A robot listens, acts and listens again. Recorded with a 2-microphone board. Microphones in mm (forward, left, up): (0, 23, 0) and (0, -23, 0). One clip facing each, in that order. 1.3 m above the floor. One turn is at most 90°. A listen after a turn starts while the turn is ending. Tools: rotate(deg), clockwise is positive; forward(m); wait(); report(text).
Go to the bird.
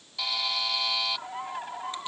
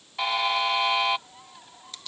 rotate(-60)
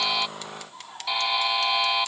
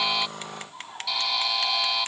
forward(1.0)
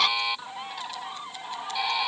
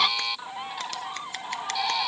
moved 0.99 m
forward(1.0)
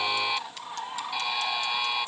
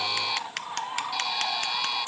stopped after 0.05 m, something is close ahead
rotate(10)
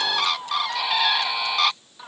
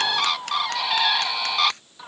report("I am next to the bird.")